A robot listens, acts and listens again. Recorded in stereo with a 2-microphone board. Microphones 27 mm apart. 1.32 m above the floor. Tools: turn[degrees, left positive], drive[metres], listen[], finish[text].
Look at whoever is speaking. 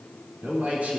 Thought: The man speaking: about 70° right or 110° right.
Action: turn[-70]
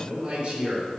Thought: So it is at 40° right.
Action: turn[-40]
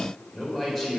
Thought: The man speaking is now 10° left.
Action: turn[10]
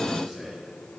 Action: finish[Found it: a man speaking, straight ahead, over 4 m away.]